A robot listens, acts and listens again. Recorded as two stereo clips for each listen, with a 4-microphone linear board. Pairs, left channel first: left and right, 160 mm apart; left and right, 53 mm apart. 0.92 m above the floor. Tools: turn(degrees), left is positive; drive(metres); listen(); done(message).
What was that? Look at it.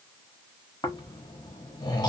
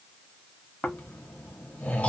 turn(degrees=25)
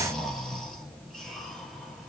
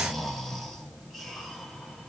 done("Found it: snoring, straight ahead.")